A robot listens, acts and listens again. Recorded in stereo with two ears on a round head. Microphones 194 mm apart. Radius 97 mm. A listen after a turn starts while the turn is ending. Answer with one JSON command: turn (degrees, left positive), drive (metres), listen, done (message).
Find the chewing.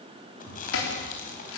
{"turn": 40}
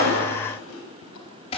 {"turn": 100}
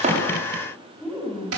{"done": "Facing the chewing."}